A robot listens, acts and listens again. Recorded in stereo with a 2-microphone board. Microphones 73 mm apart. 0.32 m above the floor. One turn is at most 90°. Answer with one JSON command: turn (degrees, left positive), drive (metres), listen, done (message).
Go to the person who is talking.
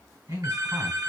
{"turn": -50}
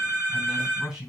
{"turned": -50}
{"turn": -10}
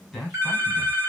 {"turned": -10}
{"drive": 1.0}
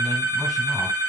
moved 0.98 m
{"listen": true}
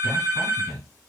{"drive": 1.0}
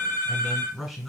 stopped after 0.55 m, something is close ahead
{"done": "Arrived at the man speaking, straight ahead."}